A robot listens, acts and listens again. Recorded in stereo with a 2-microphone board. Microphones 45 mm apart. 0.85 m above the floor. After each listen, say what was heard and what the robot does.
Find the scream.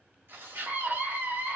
The scream: about 55° right or 125° right. Turn 55° right.
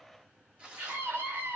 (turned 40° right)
So it is at 80° right. Turn 80° right.
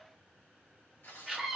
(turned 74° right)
Found it: a scream, straight ahead.